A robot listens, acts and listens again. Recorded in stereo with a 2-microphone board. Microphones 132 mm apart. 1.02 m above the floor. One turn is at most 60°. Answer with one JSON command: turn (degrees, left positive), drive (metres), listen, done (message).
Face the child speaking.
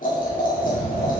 {"turn": -30}
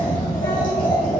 {"turn": 30}
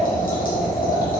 {"listen": true}
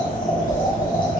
{"turn": 15}
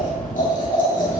{"done": "Found it: a child speaking, straight ahead, over 4 m away."}